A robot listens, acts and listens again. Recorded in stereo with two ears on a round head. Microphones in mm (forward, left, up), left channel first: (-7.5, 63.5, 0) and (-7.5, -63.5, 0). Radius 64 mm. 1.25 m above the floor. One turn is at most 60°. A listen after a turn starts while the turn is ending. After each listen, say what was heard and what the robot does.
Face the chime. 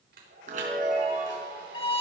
The chime: about 60° right or 120° right. Turn 60° right.
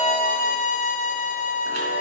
Keep listening.
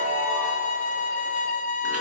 Keep listening.
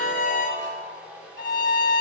So it is at 55° right. Turn 55° right.
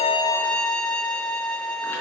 Keep listening.
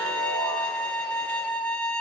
Keep listening.
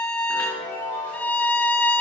The chime is now 15° left. Turn 15° left.
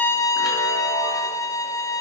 Keep listening.
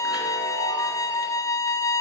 Keep listening.
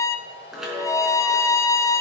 Found it: a chime, straight ahead, over 4 m away.